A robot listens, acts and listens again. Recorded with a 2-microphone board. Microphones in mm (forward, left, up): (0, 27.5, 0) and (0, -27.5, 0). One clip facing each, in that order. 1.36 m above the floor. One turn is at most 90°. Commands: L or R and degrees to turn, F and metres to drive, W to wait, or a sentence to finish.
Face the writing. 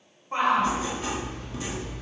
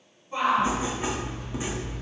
R20
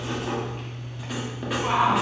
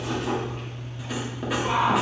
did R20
Found it: writing, straight ahead.